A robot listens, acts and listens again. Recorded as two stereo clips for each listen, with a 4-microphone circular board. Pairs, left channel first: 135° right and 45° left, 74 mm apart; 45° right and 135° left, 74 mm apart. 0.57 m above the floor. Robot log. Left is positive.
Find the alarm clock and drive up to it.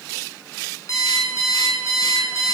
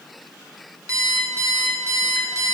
note: The alarm clock: straight behind.
cmd yaw +180
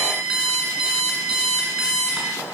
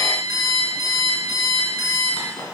note: The alarm clock is now 35° right.
cmd yaw -35
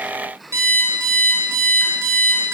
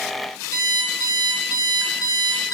cmd fwd 1.0
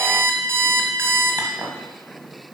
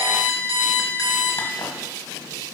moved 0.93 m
note: The alarm clock is now 10° right.
cmd yaw -10
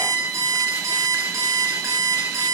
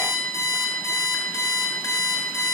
cmd fwd 1.0
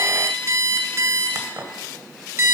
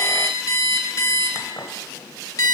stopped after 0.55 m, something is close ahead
end: Arrived at the alarm clock, straight ahead.